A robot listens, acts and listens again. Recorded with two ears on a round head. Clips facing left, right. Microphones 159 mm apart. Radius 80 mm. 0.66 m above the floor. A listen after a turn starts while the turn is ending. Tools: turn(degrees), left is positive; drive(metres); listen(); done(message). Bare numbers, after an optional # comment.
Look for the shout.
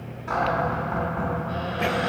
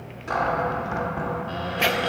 listen()
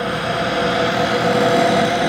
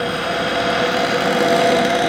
listen()
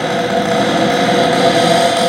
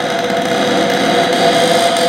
done("I can't make out a shout, only a cupboard door.")